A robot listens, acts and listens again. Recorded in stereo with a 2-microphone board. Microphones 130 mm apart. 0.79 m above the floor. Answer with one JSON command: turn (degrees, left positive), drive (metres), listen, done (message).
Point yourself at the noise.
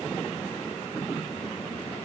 {"listen": true}
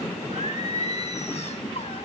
{"turn": 55}
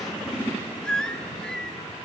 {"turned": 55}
{"done": "Facing the singing, 1 to 2 m away."}